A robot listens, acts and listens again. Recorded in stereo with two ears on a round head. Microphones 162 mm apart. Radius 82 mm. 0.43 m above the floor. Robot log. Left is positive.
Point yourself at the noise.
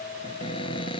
note: The cupboard door: about 30° left or 150° left.
cmd yaw +30
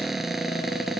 end: Facing the cupboard door.